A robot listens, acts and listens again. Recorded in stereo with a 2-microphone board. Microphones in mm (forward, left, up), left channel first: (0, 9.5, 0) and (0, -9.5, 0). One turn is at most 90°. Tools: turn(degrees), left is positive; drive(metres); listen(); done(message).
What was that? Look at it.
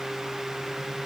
listen()
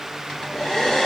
turn(degrees=50)
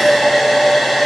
done("Facing the hair dryer, 1 to 2 m away.")